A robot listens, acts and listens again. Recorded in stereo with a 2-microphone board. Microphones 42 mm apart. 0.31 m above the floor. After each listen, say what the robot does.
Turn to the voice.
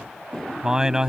Turn 15° right.
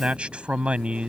Turn 150° right.
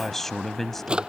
Turn 10° left.
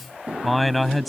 Found it: a man speaking, straight ahead.